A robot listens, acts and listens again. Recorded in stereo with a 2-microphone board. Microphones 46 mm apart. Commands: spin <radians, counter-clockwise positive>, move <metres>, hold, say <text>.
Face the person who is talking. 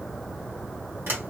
hold
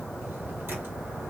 hold
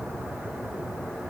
say I can't make out anyone speaking.